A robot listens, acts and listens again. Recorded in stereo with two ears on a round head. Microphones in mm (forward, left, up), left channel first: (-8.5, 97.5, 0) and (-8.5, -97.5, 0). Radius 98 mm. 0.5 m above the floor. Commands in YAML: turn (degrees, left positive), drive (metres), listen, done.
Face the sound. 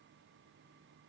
listen: true
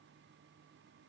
listen: true
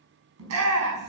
turn: -90
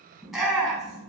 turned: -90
done: "Found it: a shout, straight ahead."